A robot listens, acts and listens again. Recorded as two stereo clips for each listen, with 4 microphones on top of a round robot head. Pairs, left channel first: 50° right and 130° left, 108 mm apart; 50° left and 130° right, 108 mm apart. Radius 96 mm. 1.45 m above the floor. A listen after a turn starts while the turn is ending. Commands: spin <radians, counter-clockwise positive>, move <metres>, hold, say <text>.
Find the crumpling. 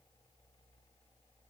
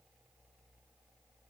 hold
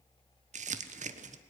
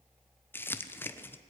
spin 2.18
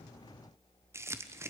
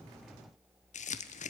spin 1.05
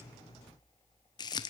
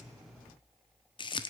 say Facing the crumpling.